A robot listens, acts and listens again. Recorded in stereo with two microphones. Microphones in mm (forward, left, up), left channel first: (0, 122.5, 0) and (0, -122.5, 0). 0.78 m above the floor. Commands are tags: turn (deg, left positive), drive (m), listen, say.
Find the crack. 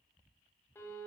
<listen/>
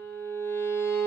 <listen/>
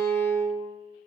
<say>I can't make out a crack to turn to.</say>